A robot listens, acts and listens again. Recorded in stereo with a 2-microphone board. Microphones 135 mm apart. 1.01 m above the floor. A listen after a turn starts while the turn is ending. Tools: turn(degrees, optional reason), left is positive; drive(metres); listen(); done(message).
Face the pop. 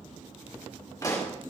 turn(degrees=25, reason="The pop: about 25° left or 155° left.")
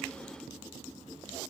listen()
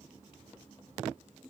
done("I heard a pop, but can't make it out now. It was about straight ahead or 130° left.")